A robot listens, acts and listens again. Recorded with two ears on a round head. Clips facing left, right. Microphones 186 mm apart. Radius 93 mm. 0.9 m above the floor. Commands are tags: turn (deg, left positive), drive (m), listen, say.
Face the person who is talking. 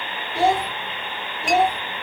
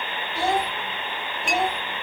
<turn deg="25"/>
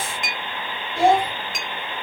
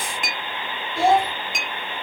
<say>Found it: a child speaking, straight ahead, 2 to 4 m away.</say>